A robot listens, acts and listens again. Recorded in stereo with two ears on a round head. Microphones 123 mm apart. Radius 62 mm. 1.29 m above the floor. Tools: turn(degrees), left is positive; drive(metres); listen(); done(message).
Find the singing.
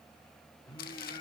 turn(degrees=35)
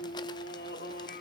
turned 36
turn(degrees=100)
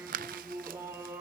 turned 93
turn(degrees=-20)
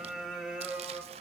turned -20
turn(degrees=-10)
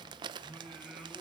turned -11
done("Found it: singing, straight ahead.")